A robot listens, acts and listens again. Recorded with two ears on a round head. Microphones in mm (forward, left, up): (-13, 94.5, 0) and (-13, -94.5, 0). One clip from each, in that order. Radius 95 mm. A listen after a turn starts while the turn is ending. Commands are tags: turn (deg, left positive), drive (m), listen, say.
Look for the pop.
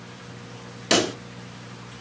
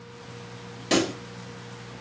<turn deg="35"/>
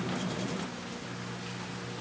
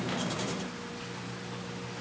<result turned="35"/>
<listen/>
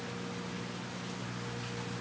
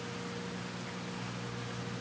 <say>I heard a pop, but can't make it out now. It was about straight ahead or 110° left.</say>